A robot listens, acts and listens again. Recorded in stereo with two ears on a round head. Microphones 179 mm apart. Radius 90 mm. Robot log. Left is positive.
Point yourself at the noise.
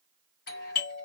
note: The doorbell: about 50° left or 130° left.
cmd yaw +50
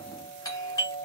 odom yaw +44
note: So it is at 20° left.
cmd yaw +20
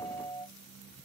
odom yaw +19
end: Facing the doorbell, 1 to 2 m away.